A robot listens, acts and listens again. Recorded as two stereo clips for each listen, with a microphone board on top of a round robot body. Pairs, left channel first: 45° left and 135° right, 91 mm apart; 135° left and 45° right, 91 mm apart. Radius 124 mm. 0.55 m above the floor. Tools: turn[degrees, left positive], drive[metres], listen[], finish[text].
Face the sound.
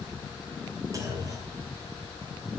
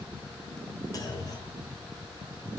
Thought: The clunk: straight behind.
Action: turn[180]
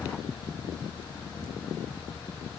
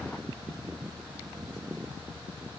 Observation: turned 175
Action: finish[Facing where the clunk came from. I can't hear it now.]